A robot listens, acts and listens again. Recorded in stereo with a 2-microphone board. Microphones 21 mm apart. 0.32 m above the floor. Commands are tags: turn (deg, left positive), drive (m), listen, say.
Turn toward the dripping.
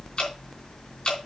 <turn deg="40"/>
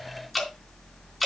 <say>Found it: dripping, straight ahead.</say>